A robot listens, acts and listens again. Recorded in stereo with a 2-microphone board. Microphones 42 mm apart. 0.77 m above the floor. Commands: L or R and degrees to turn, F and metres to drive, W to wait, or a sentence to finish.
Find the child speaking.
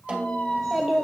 R30
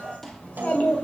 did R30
L35
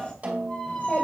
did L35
L35
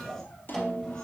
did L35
L15
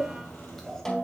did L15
L10
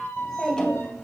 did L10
Found it: a child speaking, straight ahead.